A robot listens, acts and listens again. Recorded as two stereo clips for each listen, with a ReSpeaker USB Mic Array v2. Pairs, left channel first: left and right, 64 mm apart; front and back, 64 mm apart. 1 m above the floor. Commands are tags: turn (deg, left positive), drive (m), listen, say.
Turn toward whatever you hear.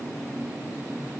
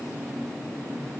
<listen/>
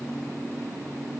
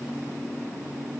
<listen/>
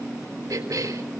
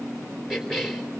<turn deg="-95"/>
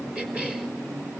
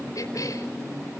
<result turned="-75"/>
<turn deg="-20"/>
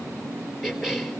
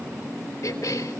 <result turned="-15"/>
<say>Facing the cough, over 4 m away.</say>